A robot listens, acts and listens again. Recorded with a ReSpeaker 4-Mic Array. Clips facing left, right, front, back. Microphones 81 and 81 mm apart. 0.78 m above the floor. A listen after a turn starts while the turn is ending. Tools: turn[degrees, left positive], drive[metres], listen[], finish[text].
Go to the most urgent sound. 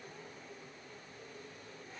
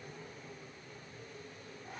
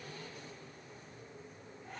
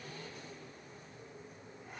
Action: listen[]
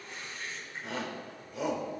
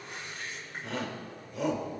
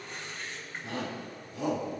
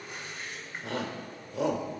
Thought: The shout: straight behind.
Action: turn[180]
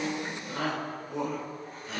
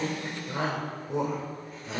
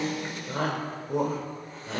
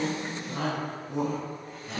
Thought: The shout is now 25° right.
Action: turn[-25]
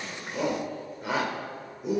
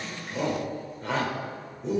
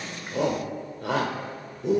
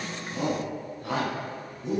Thought: The shout is now 10° left.
Action: turn[10]
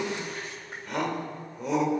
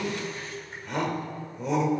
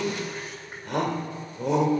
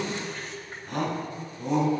Action: drive[1.0]
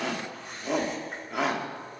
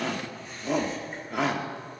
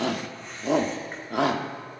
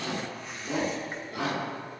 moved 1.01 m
Action: drive[1.0]
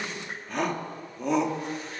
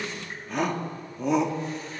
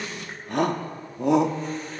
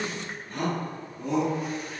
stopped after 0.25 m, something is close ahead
Action: finish[Arrived at the shout, straight ahead.]